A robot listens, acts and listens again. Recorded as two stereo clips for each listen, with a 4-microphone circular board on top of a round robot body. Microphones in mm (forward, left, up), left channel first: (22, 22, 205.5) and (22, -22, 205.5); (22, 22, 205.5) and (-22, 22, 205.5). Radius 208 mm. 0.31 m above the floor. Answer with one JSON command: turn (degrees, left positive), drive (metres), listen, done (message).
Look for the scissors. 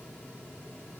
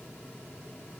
{"listen": true}
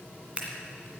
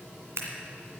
{"turn": -155}
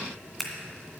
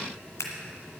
{"done": "Facing the scissors, 2 to 4 m away."}